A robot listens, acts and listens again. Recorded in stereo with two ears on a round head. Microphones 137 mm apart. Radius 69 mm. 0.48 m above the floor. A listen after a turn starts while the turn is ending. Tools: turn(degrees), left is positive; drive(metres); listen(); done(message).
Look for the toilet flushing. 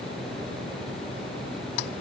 listen()
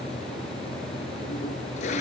turn(degrees=50)
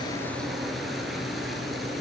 listen()
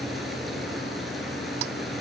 listen()
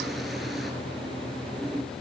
done("I heard a toilet flushing, but can't make it out now. It was about straight ahead or 80° left.")